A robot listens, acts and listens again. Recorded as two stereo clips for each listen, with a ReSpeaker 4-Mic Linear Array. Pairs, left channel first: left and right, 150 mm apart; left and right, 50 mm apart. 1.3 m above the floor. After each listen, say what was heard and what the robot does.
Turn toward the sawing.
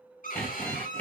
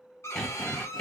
Turn 30° left.
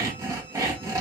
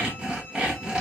So it is at 20° right. Turn 20° right.
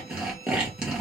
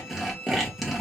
Facing the sawing, 1 to 2 m away.